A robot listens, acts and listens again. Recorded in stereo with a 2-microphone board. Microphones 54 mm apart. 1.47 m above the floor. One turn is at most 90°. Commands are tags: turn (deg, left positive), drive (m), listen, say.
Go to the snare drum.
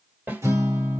<turn deg="-35"/>
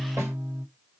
<listen/>
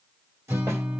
<listen/>
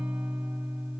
<say>I heard a snare drum, but can't make it out now. It was about straight ahead or 110° right. I did not reach it.</say>